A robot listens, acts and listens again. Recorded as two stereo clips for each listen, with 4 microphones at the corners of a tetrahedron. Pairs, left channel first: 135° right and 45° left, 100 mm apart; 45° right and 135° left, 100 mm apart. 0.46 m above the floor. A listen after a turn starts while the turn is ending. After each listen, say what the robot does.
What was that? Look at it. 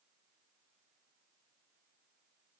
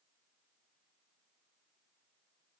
Keep listening.
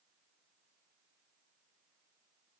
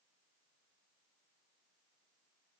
Keep listening.
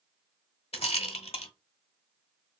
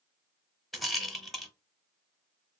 Turn 135° right.
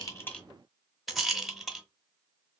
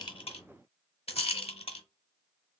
Turn 45° right.
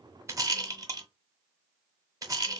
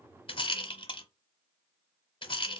Turn 10° right.
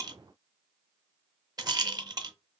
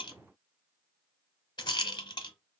Facing the rattle.